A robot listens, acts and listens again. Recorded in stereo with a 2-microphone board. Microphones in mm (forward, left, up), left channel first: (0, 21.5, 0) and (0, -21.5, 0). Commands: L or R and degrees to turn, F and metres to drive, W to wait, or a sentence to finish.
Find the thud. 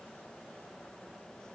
W
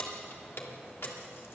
W
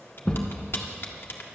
L25
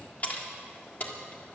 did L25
W
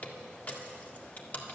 I heard a thud, but can't make it out now. It was about straight ahead or 130° left.